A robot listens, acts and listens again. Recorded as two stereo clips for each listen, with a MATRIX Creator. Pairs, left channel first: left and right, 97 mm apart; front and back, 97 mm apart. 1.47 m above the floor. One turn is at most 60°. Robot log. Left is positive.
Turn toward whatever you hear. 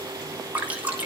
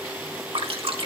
note: The dripping: 165° right.
cmd yaw -60
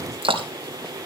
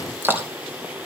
note: The dripping is now 110° right.
cmd yaw -60
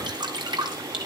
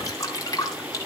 note: The dripping is now 50° right.
cmd yaw -50
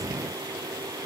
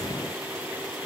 cmd idle
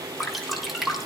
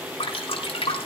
end: Found it: dripping, straight ahead, 2 to 4 m away.